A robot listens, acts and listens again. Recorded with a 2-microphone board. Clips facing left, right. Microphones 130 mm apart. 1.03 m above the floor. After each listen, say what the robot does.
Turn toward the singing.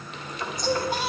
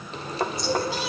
Turn 55° left.
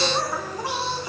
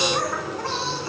Turn 15° left.
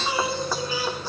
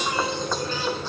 Turn 10° left.
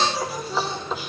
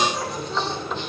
Facing the singing, over 4 m away.